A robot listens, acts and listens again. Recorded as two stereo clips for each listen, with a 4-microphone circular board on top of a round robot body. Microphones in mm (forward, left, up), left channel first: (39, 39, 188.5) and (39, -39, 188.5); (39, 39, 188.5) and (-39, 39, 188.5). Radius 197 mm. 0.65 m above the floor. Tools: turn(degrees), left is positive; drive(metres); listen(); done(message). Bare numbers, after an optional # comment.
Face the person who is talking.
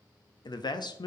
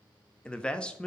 # The man speaking: 75° left.
turn(75)
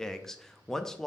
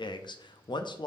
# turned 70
done("Found it: a man speaking, straight ahead, under 1 m away.")